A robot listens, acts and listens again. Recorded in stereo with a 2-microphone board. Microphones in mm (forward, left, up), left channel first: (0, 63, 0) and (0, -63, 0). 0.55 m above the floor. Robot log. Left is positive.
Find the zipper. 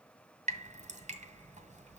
cmd idle
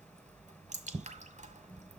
cmd idle
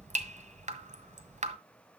end: I can't make out a zipper to turn to.